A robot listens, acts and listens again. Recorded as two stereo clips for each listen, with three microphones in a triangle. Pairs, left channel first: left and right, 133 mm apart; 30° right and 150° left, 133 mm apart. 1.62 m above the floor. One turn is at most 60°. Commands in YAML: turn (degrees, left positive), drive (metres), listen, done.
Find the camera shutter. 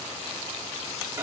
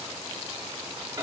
listen: true
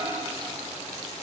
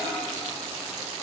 listen: true
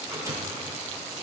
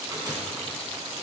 done: "I can't make out a camera shutter, only a microwave."